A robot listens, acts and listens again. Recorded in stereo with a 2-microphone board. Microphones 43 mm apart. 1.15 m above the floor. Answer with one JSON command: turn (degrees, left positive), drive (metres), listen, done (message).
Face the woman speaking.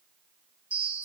{"listen": true}
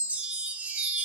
{"listen": true}
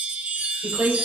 {"turn": -55}
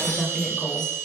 {"done": "Found it: a woman speaking, straight ahead, over 4 m away."}